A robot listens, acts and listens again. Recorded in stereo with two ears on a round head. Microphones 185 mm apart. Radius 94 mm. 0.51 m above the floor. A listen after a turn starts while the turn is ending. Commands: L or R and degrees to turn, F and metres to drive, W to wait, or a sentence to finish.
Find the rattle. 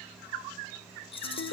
L30
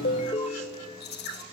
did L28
L125
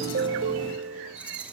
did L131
W
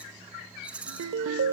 Facing the rattle.